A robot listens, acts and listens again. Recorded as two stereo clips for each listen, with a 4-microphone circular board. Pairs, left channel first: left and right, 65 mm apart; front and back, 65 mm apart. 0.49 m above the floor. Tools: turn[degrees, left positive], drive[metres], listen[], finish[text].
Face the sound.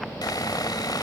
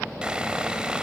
Thought: The sawing: 105° left.
Action: turn[105]
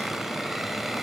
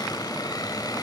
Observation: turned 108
Action: listen[]
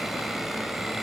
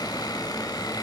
Action: listen[]
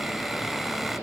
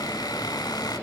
Action: finish[Facing the sawing.]